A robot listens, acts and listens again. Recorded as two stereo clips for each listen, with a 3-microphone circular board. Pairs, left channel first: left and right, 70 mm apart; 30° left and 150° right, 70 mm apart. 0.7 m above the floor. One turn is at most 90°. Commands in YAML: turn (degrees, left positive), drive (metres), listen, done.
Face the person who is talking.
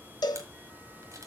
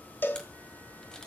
listen: true
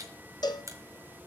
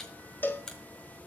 listen: true
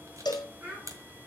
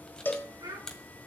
turn: -90
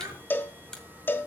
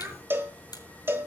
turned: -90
turn: -80
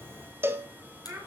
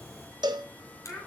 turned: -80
turn: -45
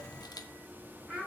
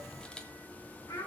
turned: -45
turn: -10
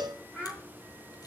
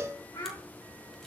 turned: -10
done: "Facing the child speaking, over 4 m away."